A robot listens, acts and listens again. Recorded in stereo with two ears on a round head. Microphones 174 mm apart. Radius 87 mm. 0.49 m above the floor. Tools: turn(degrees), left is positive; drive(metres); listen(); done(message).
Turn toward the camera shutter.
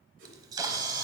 turn(degrees=-20)
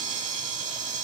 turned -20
turn(degrees=-140)
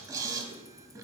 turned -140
turn(degrees=-20)
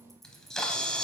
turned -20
done("Found it: a camera shutter, straight ahead, under 1 m away.")